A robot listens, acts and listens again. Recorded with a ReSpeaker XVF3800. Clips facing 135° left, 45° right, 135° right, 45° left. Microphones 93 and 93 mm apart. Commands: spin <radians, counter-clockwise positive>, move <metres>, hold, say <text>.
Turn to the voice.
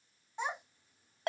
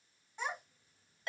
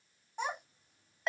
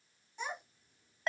spin -2.79
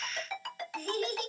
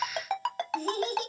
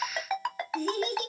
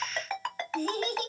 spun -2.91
say Found it: a child speaking, straight ahead, 1 to 2 m away.